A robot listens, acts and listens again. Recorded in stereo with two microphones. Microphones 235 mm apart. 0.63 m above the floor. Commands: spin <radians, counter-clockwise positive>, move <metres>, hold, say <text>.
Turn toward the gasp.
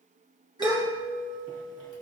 spin -0.35
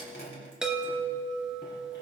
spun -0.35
hold
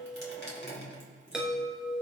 say I heard a gasp, but can't make it out now. It was about straight ahead or 140° right.